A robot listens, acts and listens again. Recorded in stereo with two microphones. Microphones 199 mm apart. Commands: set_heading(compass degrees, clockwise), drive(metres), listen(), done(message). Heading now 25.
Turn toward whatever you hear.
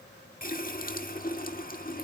set_heading(335)
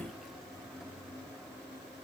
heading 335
done("Facing the running tap, 1 to 2 m away.")